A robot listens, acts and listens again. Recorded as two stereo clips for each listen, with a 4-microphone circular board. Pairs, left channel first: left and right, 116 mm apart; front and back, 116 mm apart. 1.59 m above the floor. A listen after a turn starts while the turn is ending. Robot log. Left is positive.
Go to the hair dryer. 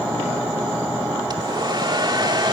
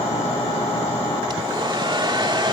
note: The hair dryer: 135° right.
cmd yaw -135
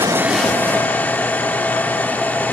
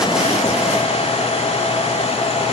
note: The hair dryer is now 15° left.
cmd yaw +15
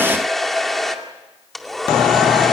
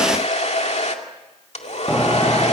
cmd fwd 1.0
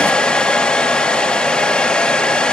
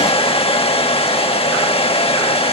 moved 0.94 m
note: The hair dryer is now 10° left.
cmd yaw +10
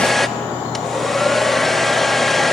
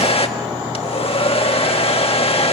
cmd fwd 1.0
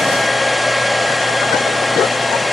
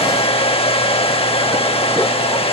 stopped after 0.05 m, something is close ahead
end: Arrived at the hair dryer, straight ahead.